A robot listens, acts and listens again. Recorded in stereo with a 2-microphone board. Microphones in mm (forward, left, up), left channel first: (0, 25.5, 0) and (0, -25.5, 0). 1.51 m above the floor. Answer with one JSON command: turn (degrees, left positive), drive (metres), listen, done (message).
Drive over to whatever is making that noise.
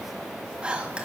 {"turn": -15}
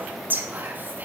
{"turn": -145}
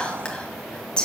{"turn": 15}
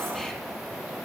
{"listen": true}
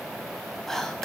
{"drive": 1.0}
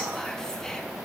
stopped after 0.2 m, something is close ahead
{"listen": true}
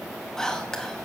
{"turn": 10}
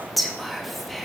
{"done": "Something is in my way. I am facing the whispering but have not reached it."}